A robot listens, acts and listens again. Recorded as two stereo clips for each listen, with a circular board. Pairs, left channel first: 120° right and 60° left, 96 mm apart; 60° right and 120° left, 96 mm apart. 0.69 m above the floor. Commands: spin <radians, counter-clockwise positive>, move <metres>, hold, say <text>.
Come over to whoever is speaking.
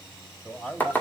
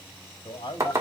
spin -0.79
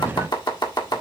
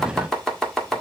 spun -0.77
hold
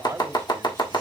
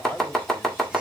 move 1.0
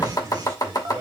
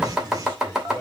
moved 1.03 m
move 1.0
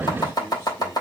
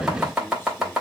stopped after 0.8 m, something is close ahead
hold
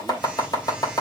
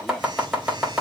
hold
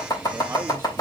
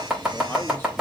say Facing where the man speaking came from. I can't hear it now. I did not reach it.